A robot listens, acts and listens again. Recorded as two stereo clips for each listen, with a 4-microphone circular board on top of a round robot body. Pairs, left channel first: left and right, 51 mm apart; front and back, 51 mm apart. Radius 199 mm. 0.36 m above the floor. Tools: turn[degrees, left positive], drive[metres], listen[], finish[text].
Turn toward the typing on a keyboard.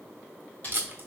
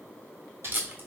Thought: The typing on a keyboard: 145° left.
Action: turn[145]
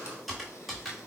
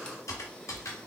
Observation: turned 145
Action: finish[Facing the typing on a keyboard, 1 to 2 m away.]